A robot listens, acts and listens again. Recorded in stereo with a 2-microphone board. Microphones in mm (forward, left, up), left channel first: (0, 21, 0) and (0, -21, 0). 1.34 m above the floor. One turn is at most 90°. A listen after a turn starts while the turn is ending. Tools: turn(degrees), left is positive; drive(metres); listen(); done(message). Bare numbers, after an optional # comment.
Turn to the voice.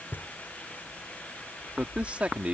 # The man speaking: about 35° right or 145° right.
turn(-35)
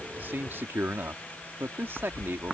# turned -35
# So it is at 110° right.
turn(-90)
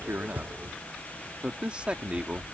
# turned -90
# The man speaking is now 25° right.
turn(-25)
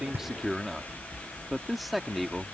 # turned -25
done("Found it: a man speaking, straight ahead.")